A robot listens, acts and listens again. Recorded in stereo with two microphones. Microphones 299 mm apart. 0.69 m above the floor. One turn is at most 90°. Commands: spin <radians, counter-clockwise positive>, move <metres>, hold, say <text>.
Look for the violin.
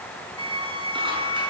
spin 0.79
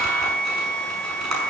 say Facing the violin, over 4 m away.